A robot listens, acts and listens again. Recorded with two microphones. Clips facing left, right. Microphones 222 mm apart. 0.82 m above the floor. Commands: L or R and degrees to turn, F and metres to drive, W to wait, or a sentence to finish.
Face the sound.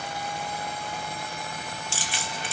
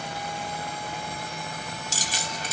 R40
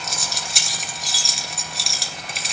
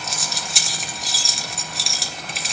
Facing the keys jangling.